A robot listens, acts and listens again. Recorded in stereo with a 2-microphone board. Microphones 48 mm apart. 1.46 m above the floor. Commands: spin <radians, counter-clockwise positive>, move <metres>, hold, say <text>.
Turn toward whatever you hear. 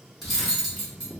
spin 0.52
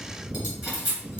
spin -0.52
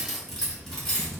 say Found it: cutlery clinking, straight ahead, 1 to 2 m away.